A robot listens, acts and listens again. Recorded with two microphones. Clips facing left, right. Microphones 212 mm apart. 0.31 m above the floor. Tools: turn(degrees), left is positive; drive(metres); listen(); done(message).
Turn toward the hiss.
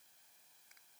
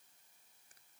listen()
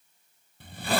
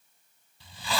turn(degrees=55)
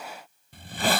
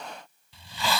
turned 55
turn(degrees=60)
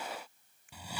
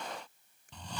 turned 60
turn(degrees=10)
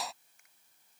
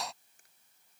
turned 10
done("Facing the hiss.")